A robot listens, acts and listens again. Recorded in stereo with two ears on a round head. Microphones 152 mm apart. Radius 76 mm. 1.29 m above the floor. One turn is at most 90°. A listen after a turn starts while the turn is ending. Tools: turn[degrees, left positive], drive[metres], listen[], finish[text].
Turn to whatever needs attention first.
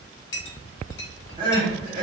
Thought: The crying: about 30° right or 150° right.
Action: turn[-30]
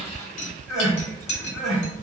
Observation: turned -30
Action: finish[Facing the crying, 1 to 2 m away.]